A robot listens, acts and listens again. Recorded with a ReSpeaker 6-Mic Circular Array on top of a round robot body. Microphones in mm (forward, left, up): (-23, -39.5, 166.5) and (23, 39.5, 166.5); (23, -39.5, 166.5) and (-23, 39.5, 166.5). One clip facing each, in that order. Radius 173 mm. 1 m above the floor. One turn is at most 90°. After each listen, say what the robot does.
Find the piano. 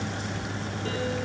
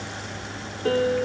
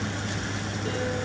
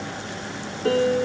Turn 90° left.
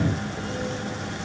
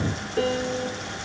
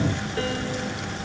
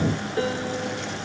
Turn 55° left.
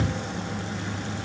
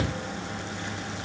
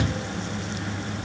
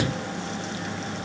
Keep listening.
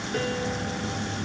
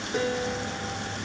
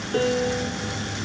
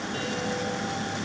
Turn 20° right.
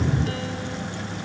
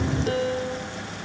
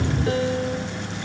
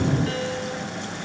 Facing the piano, 1 to 2 m away.